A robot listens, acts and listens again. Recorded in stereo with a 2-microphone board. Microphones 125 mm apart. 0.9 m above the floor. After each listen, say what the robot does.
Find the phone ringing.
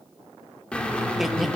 Keep listening.
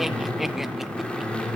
Keep listening.
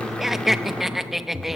I can't make out a phone ringing, only a drill and laughter.